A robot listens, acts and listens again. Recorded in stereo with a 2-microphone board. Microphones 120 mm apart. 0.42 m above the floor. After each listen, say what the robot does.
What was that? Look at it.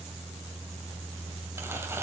Turn 20° right.
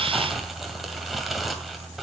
Facing the crumpling, 2 to 4 m away.